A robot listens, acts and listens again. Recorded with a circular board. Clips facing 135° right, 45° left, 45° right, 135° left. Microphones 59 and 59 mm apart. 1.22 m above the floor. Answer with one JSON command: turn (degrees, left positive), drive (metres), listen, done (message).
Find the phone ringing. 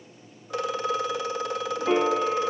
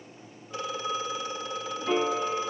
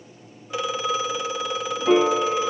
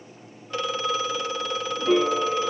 {"turn": -130}
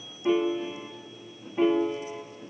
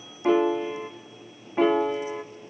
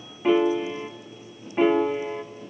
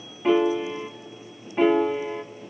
{"listen": true}
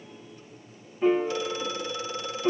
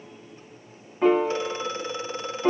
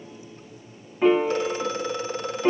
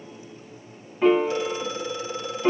{"turn": -15}
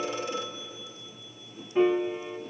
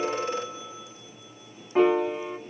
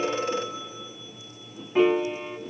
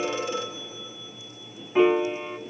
{"done": "Facing the phone ringing."}